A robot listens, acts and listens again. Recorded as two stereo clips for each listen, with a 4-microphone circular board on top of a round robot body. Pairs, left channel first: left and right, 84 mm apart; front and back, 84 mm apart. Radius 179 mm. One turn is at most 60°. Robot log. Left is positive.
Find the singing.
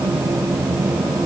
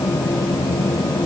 cmd idle
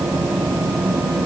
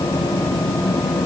cmd idle
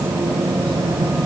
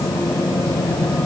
end: I can't make out singing to turn to.